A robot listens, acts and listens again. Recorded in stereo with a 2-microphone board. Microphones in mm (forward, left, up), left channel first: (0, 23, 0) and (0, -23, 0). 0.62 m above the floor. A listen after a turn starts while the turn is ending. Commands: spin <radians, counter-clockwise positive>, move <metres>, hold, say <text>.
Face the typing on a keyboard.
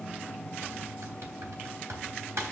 spin -1.57
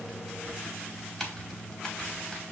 spin 0.17
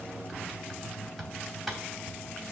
say Facing the typing on a keyboard.